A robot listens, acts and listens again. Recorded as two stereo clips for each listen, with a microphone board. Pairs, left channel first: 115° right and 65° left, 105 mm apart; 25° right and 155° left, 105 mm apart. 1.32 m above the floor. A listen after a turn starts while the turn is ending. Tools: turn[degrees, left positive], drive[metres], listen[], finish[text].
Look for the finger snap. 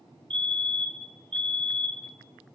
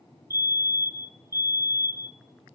Action: listen[]
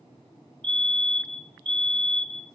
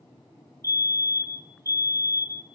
Action: listen[]
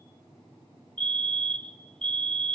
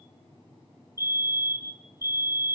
Action: finish[I can't make out a finger snap to turn to.]